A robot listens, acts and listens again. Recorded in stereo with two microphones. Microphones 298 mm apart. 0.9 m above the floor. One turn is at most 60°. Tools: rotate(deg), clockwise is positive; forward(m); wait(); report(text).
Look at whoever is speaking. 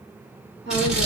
rotate(35)
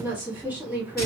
report("Found it: a woman speaking, straight ahead, 1 to 2 m away.")